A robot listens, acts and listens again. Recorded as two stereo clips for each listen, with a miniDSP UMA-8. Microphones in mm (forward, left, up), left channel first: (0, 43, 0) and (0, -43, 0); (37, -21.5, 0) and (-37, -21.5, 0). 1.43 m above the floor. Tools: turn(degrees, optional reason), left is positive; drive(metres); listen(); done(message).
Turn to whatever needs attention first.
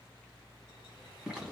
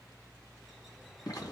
listen()
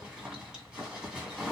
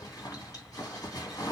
listen()
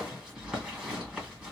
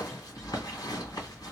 done("I can't make out anything urgent, only a bird and a zipper.")